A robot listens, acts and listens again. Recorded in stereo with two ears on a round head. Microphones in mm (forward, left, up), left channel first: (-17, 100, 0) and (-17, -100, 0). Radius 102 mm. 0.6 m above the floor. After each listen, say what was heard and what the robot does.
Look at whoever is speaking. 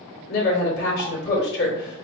The woman speaking: about 45° left or 135° left. Turn 45° left.
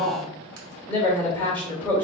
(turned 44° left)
So it is at 10° left. Turn 10° left.
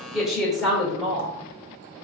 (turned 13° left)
Facing the woman speaking, 2 to 4 m away.